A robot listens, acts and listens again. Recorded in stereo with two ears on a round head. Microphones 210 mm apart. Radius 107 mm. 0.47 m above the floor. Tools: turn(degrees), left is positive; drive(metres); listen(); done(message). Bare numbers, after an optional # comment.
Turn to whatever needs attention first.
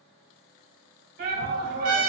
# The shout: about 40° right or 140° right.
turn(-40)
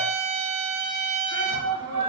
# So it is at 90° right.
turn(-90)
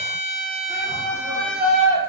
# The shout is now 20° right.
turn(-20)
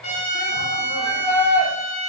done("Facing the shout, 1 to 2 m away.")